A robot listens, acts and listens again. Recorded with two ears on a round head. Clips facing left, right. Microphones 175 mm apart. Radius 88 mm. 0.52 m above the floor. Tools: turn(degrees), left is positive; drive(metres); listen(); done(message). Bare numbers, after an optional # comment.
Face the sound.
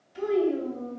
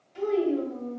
turn(30)
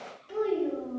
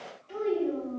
turn(30)
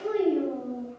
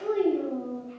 # So it is at 150° left.
turn(150)
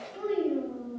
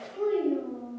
# The child speaking is now 25° left.
turn(25)
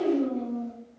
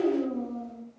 done("Facing the child speaking.")